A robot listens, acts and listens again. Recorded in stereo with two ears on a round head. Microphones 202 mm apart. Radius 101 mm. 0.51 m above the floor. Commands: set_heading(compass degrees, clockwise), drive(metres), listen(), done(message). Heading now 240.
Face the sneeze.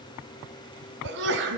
set_heading(295)
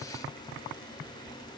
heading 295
listen()
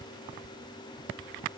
done("I heard a sneeze, but can't make it out now. It was about straight ahead or 70° right.")